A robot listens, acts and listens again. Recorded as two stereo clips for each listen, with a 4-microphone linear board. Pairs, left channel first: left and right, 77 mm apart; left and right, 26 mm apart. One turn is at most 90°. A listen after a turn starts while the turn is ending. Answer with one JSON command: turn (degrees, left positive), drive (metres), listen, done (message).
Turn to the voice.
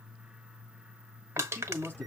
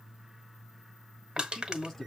{"turn": 20}
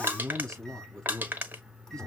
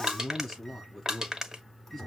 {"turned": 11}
{"done": "Found it: a man speaking, straight ahead, over 4 m away."}